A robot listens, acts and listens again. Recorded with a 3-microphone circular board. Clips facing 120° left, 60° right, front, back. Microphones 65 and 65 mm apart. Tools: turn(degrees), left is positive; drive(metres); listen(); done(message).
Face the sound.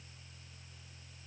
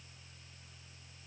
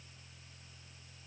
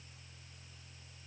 listen()
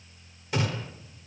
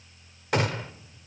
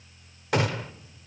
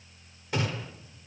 turn(degrees=-25)
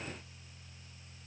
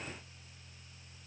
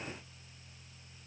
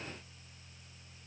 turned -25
done("I heard a gunshot from this way, but can't make it out now.")